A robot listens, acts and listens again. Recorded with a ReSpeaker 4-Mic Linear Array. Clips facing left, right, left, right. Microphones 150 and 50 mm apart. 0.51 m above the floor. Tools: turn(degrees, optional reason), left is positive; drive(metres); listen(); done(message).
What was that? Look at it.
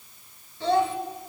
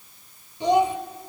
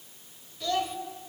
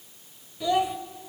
turn(degrees=-15, reason="The child speaking: about 15° right or 165° right.")
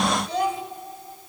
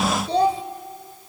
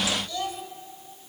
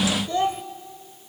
turn(degrees=-150, reason="So it is at 150° right.")
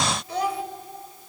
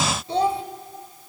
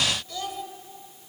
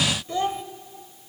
turn(degrees=-30, reason="The child speaking is now 30° right.")
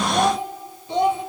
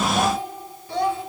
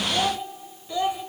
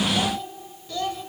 turn(degrees=20, reason="The child speaking is now 20° left.")
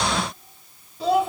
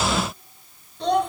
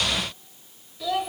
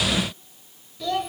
done("Found it: a child speaking, straight ahead.")